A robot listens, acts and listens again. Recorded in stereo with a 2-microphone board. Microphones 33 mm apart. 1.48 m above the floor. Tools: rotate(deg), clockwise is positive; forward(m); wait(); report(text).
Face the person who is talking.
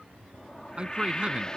rotate(30)
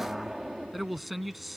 report("Found it: a man speaking, straight ahead.")